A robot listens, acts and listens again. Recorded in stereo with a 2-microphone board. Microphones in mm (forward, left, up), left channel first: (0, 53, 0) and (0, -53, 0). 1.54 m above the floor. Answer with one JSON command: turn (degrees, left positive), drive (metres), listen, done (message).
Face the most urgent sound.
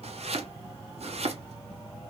{"listen": true}
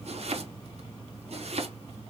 {"listen": true}
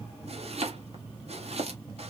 {"done": "I can't make out anything urgent, only chopping."}